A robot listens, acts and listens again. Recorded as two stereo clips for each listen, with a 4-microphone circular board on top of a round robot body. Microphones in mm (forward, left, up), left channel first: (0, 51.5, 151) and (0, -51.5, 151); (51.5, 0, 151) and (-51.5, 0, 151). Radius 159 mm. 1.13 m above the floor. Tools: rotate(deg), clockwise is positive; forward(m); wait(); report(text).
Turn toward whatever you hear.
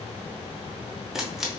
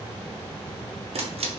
rotate(175)
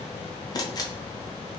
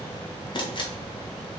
rotate(-40)
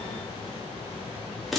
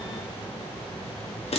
report("Found it: a camera shutter, straight ahead.")